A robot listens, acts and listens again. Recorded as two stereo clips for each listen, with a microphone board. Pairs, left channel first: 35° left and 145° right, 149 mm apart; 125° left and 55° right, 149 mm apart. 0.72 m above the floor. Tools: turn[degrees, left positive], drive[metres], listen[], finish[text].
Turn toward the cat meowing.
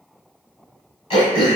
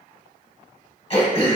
Action: listen[]
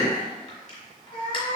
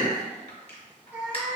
Thought: The cat meowing: 20° left.
Action: turn[20]
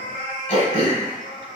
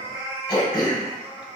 Action: finish[Found it: a cat meowing, straight ahead.]